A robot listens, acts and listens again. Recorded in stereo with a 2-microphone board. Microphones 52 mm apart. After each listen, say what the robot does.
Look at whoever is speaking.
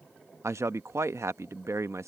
Turn 65° right.
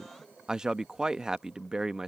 Turn 15° right.
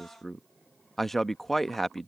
Found it: a man speaking, straight ahead.